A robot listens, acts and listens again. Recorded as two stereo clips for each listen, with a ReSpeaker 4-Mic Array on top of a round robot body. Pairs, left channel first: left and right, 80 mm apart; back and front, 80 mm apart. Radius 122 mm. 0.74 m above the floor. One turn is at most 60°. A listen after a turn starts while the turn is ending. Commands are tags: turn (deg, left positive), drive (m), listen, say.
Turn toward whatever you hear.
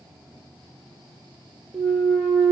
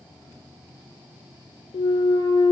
<turn deg="-60"/>
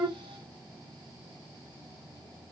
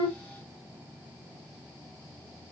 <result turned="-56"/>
<turn deg="-60"/>
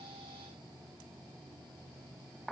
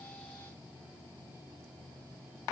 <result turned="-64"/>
<turn deg="-50"/>
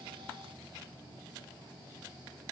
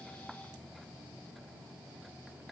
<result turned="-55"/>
<say>Facing where the clunk came from. I can't hear it now.</say>